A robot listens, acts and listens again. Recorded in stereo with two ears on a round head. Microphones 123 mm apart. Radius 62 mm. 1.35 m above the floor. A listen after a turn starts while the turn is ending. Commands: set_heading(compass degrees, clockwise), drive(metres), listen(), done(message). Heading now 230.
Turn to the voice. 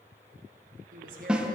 set_heading(300)
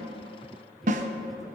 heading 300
listen()
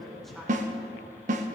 done("Facing the woman speaking, 1 to 2 m away.")